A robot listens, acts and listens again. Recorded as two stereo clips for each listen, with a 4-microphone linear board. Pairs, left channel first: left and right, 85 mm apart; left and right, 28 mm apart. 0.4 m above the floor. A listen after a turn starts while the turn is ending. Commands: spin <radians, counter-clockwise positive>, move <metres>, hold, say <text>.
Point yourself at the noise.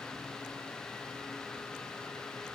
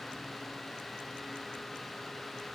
hold
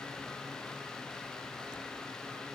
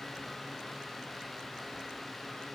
hold
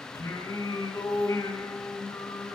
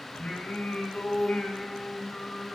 spin 0.96
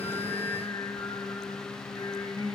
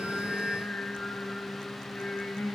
spin 1.13
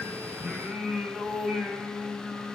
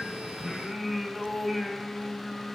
spin -0.35
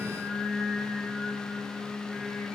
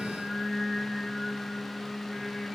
say Found it: singing, straight ahead, 2 to 4 m away.